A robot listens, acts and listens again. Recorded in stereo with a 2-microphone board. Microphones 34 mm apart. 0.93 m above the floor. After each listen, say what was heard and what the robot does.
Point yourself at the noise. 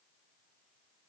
Keep listening.
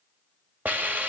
The hiss: about 55° right or 125° right. Turn 55° right.
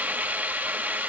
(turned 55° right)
So it is at 65° right. Turn 65° right.
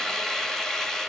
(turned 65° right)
The hiss is now 15° left. Turn 15° left.
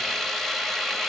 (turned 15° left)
Found it: a hiss, straight ahead.